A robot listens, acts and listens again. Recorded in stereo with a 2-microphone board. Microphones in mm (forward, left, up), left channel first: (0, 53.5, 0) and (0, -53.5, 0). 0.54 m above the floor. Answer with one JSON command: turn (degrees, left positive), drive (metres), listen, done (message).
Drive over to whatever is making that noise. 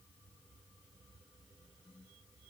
{"listen": true}
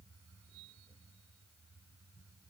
{"listen": true}
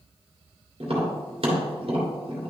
{"turn": -60}
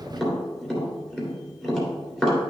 {"drive": 1.0}
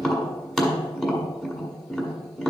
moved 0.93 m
{"drive": 1.0}
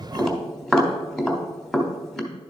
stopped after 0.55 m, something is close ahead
{"done": "Arrived at the tapping, straight ahead."}